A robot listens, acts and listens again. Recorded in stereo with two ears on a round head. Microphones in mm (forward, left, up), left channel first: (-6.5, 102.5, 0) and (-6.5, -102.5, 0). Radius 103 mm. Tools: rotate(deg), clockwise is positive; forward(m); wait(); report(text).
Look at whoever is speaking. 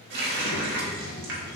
rotate(-50)
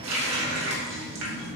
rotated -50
report("Found it: a child speaking, straight ahead.")